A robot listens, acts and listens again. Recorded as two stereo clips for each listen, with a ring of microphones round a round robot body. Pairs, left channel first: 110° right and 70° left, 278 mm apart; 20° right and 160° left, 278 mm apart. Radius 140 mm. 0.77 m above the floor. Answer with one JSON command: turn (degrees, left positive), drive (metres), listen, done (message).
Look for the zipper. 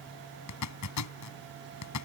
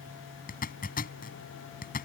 {"turn": -85}
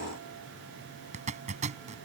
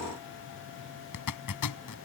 {"done": "Facing the zipper."}